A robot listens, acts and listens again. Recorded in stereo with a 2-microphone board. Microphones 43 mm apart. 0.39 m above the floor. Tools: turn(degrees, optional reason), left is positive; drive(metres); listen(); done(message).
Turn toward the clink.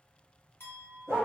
turn(degrees=60, reason="The clink: about 60° left or 120° left.")
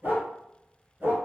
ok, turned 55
listen()
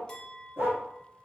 turn(degrees=15, reason="So it is at 15° left.")
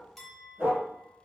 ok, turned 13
done("Found it: a clink, straight ahead, 1 to 2 m away.")